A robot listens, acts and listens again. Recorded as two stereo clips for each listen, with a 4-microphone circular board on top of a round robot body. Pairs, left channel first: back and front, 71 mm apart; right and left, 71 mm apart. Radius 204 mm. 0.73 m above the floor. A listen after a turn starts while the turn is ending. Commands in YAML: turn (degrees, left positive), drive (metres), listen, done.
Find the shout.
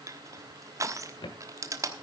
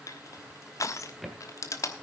listen: true
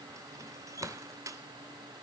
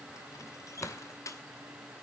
listen: true
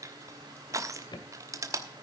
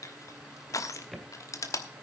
done: "I can't make out a shout to turn to."